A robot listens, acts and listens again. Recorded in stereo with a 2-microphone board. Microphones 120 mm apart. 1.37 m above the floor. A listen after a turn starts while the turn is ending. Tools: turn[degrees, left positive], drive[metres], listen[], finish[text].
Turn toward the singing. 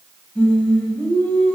Action: turn[30]
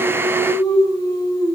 Thought: So it is at 150° left.
Action: turn[150]
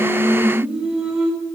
Action: finish[Facing the singing.]